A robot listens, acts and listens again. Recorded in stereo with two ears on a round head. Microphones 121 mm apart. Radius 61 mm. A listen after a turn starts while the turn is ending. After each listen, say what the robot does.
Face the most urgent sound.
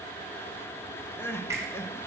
Turn 20° left.
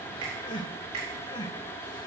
Turn 140° left.
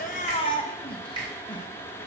Turn 40° left.
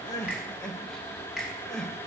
Facing the crying.